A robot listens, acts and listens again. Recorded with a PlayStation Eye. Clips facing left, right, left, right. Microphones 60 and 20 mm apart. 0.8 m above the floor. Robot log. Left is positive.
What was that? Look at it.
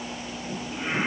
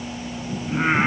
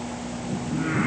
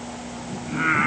note: The singing: about 50° right or 130° right.
cmd yaw -50
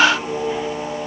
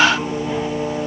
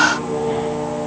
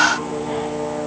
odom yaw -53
note: So it is at 10° left.
cmd yaw +10
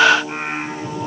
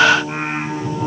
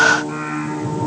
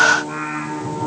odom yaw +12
end: Found it: singing, straight ahead.